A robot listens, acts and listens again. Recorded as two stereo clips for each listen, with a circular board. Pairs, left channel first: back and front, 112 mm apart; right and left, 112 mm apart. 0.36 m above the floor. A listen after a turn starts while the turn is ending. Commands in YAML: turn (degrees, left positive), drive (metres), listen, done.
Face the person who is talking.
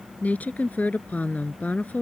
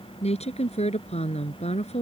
turn: -105
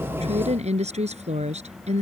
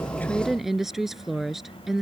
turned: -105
done: "Facing the woman speaking."